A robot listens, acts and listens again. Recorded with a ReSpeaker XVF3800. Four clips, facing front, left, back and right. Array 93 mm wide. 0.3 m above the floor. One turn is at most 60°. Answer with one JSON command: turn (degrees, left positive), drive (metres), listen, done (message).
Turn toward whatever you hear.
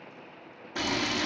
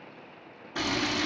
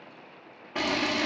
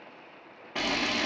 {"turn": -60}
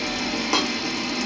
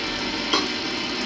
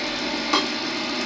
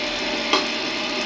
{"turn": -60}
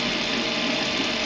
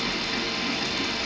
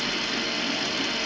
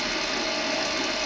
{"turn": -15}
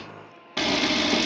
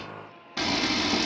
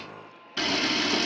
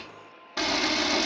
{"done": "Facing the camera shutter, 1 to 2 m away."}